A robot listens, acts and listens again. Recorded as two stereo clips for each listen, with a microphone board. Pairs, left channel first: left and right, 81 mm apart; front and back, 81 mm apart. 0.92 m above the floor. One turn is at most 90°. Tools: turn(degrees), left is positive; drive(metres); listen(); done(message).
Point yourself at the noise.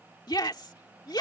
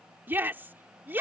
turn(degrees=90)
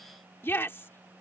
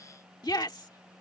turn(degrees=30)
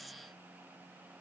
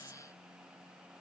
listen()
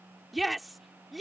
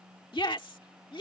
done("Facing the shout.")